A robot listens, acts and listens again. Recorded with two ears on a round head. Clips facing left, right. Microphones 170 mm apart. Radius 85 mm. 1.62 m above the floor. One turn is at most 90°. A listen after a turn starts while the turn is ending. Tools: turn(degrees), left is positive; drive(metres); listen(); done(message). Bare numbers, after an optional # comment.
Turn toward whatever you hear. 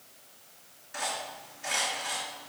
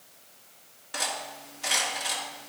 # The cutlery clinking: about 70° right or 110° right.
turn(-70)
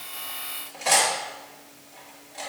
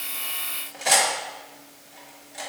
# So it is at 10° right.
turn(-10)
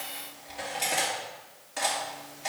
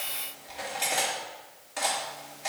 done("Facing the cutlery clinking, 2 to 4 m away.")